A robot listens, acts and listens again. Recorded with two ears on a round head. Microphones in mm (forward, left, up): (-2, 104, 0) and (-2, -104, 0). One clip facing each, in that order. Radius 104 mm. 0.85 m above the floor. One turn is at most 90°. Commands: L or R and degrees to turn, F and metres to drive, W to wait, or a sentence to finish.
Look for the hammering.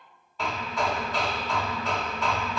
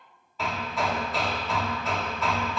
L30
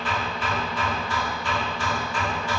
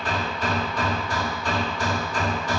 R35
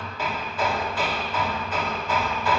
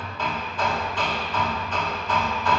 Found it: hammering, straight ahead.